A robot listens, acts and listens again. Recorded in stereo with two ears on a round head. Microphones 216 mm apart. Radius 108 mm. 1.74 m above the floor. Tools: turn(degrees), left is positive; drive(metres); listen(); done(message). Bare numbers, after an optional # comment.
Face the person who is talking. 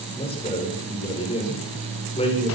# The man speaking: about 25° left or 155° left.
turn(25)
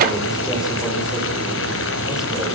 listen()
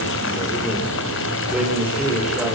listen()
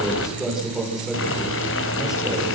done("Found it: a man speaking, straight ahead, over 4 m away.")